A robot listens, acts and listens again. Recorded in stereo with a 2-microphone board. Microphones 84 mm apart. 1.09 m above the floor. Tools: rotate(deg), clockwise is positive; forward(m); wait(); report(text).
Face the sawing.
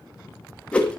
wait()
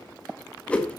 wait()
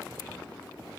report("I can't make out sawing, only a whoosh.")